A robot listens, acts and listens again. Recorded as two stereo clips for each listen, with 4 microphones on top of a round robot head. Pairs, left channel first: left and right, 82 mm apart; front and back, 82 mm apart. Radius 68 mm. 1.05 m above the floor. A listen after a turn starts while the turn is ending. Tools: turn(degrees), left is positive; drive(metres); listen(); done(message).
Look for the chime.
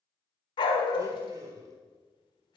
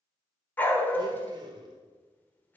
listen()
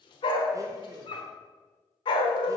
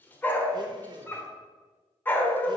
listen()
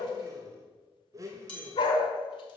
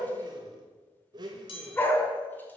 turn(degrees=15)
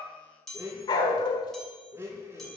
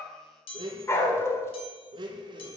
done("Found it: a chime, straight ahead.")